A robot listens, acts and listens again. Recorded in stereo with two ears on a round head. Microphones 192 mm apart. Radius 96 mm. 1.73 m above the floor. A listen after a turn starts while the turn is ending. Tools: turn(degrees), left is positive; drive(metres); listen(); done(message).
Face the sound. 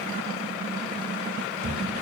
turn(degrees=-50)
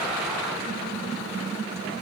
listen()
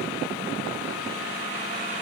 done("I heard a thud, but can't make it out now. It was about straight ahead or 80° right.")